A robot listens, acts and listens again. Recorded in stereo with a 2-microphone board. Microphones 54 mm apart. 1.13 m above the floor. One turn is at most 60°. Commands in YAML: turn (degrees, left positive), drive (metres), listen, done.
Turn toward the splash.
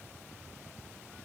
listen: true
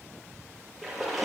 turn: 30
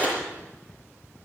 turn: 60
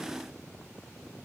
turn: 60
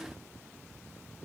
turn: 30
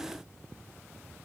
done: "I heard a splash from this way, but can't make it out now."